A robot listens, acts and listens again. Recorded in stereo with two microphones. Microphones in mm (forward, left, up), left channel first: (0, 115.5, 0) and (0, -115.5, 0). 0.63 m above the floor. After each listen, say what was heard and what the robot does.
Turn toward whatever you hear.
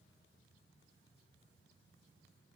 Keep listening.
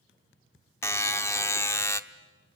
Turn 30° left.
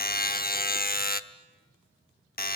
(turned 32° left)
So it is at 135° left. Turn 135° left.
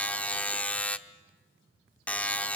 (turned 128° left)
Found it: a buzzer, straight ahead.